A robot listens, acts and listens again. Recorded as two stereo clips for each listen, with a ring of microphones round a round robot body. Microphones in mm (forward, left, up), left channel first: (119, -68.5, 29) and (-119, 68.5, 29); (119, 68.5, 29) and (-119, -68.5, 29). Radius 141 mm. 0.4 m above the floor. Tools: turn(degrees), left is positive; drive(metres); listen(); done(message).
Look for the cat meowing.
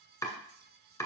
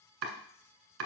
listen()
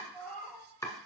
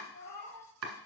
turn(degrees=60)
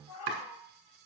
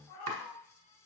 turn(degrees=10)
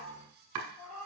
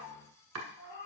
turn(degrees=10)
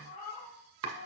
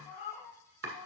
turn(degrees=10)
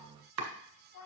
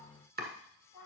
done("Facing the cat meowing.")